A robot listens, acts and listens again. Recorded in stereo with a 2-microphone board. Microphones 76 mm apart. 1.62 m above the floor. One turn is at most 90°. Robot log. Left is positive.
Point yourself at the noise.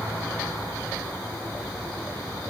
cmd idle
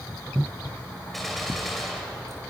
cmd yaw +30
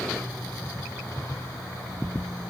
cmd idle
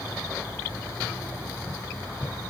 end: I heard a gunshot, but can't make it out now. It was about 30° right or 150° left.